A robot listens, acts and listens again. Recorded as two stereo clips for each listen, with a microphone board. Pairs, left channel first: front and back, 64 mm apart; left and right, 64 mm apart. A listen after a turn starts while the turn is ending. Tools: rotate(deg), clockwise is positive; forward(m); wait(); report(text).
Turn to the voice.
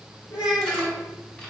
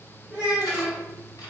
rotate(15)
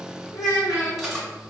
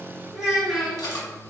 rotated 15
report("Facing the child speaking.")